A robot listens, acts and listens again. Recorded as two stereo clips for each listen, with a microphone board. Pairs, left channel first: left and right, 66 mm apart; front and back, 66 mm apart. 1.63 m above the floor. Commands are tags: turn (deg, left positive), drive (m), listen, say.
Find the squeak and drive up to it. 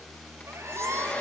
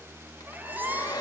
<turn deg="-120"/>
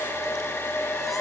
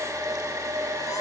<listen/>
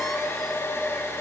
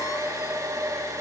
<listen/>
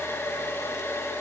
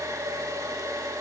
<say>I heard a squeak from this way, but can't make it out now. I did not reach it.</say>